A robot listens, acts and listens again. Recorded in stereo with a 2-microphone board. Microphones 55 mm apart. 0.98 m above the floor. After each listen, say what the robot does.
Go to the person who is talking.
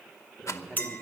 Turn 30° left.
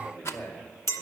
Turn 145° left.
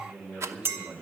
Turn 15° right.
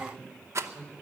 Turn 10° right.
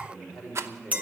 Drive 1.0 m forward.
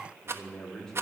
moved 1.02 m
Drive 1.0 m forward.
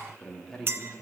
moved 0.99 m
Turn 10° left.
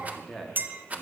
Drive 1.0 m forward.
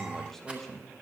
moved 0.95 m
Drive 1.0 m forward.
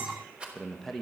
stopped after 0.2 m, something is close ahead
I am next to the man speaking.